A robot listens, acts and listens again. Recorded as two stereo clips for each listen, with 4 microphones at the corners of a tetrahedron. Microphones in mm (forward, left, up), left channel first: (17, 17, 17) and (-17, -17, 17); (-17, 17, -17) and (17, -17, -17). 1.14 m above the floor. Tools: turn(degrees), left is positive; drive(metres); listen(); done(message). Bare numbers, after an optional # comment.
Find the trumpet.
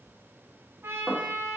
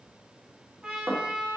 # The trumpet: 110° right.
turn(-110)
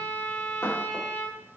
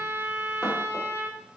done("Found it: a trumpet, straight ahead.")